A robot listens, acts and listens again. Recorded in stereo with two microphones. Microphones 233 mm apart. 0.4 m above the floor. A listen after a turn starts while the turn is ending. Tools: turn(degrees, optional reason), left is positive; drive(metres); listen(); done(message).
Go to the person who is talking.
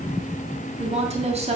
turn(degrees=-25, reason="The woman speaking: about 25° right or 155° right.")
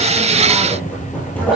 listen()
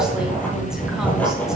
listen()
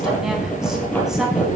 done("I heard a woman speaking, but can't make it out now. It was about straight ahead or 130° right. I did not reach it.")